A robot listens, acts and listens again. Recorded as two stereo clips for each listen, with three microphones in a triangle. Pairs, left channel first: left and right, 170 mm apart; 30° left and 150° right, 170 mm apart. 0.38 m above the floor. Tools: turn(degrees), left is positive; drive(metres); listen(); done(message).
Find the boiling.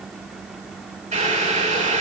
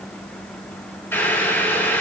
turn(degrees=-50)
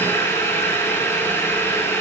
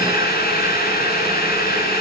turn(degrees=15)
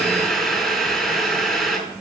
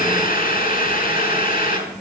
done("Facing the boiling.")